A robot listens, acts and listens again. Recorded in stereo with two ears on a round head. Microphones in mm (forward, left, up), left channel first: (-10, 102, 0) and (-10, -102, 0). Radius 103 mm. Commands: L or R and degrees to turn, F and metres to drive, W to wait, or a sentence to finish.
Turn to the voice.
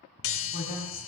L40
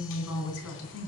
L115
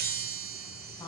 L20
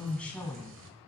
L10
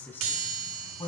L15
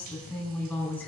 Facing the woman speaking.